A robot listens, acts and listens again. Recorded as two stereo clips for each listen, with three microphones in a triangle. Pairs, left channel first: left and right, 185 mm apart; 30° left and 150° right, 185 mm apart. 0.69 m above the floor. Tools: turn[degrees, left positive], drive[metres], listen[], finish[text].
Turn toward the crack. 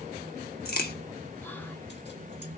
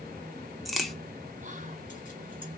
Thought: The crack: 120° left.
Action: turn[120]
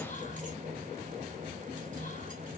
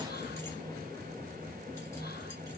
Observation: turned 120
Action: finish[I heard a crack from this way, but can't make it out now.]